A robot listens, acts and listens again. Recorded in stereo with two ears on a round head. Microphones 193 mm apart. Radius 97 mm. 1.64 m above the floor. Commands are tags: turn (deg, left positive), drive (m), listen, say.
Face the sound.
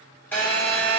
<turn deg="30"/>
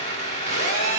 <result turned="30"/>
<turn deg="140"/>
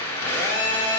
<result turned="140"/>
<turn deg="15"/>
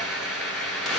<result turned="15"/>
<say>Found it: a phone buzzing, straight ahead.</say>